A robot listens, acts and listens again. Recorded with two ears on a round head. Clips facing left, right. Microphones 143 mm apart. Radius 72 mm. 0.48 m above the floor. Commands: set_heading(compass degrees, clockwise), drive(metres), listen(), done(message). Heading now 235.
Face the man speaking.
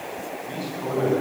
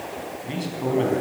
set_heading(260)
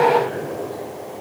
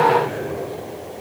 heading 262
done("Found it: a man speaking, straight ahead.")